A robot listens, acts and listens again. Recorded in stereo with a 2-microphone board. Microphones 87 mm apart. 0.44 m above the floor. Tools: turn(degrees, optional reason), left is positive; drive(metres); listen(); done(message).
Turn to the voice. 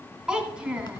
turn(degrees=-30)
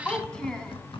turn(degrees=10, reason="So it is at 10° left.")
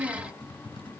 done("Found it: a child speaking, straight ahead, 2 to 4 m away.")